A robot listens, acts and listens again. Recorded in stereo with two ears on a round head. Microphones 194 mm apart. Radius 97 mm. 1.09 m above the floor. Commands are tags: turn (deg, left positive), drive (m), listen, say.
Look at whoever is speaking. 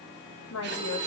<turn deg="75"/>
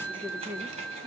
<turn deg="-10"/>
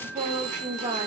<turn deg="-25"/>
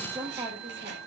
<turn deg="-20"/>
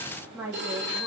<turn deg="-10"/>
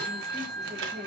<say>Found it: a woman speaking, straight ahead, 2 to 4 m away.</say>